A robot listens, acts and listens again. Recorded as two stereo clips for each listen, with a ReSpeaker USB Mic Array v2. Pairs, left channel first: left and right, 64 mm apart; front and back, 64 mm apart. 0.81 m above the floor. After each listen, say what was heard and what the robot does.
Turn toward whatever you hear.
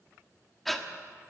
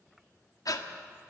Facing the breathing, 1 to 2 m away.